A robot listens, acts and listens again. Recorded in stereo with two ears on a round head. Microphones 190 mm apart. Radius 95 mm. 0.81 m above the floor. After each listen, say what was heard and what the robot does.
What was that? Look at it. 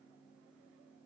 Keep listening.
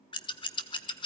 The scissors: about 20° left or 160° left. Turn 20° left.
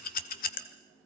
So it is at 135° left. Turn 135° left.
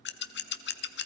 The scissors is now 55° left. Turn 55° left.
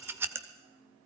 The scissors is now 10° right. Turn 10° right.
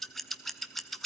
Facing the scissors, 1 to 2 m away.